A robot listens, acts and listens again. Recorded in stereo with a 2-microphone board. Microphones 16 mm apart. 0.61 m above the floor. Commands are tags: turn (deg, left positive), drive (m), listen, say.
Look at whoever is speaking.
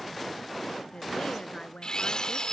<turn deg="65"/>
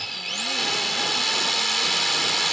<listen/>
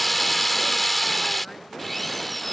<listen/>
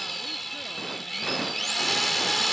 <say>I heard a woman speaking, but can't make it out now. It was about straight ahead or 50° left.</say>